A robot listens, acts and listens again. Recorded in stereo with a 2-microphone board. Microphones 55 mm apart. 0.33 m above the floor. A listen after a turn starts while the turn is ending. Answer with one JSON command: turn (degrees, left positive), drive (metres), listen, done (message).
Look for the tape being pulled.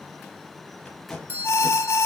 {"turn": 30}
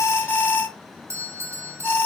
{"listen": true}
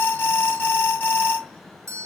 {"listen": true}
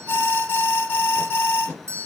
{"turn": 145}
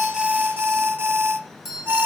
{"listen": true}
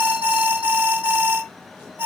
{"listen": true}
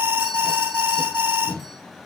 {"turn": 40}
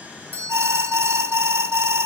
{"listen": true}
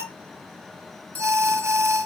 {"listen": true}
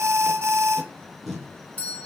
{"done": "Found it: tape being pulled, straight ahead."}